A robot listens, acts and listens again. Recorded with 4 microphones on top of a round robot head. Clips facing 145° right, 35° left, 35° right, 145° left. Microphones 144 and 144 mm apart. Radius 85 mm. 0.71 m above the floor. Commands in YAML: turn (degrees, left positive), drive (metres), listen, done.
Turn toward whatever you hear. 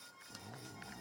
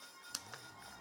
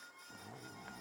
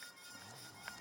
turn: -90
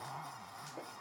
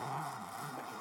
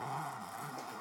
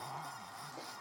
done: "Facing the zipper."